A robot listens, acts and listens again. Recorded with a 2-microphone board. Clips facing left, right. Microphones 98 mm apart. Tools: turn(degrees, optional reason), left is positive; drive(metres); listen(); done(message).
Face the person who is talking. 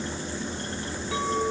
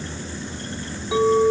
listen()
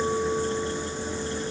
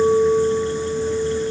listen()
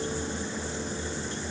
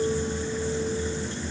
done("I can't make out anyone speaking to turn to.")